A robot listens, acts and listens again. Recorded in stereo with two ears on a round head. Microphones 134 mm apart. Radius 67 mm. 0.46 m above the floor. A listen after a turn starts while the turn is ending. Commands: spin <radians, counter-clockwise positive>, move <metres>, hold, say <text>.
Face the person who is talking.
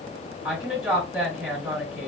spin -0.52
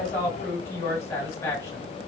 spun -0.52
spin 0.35
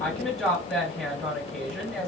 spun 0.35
say Found it: a woman speaking, straight ahead, 1 to 2 m away.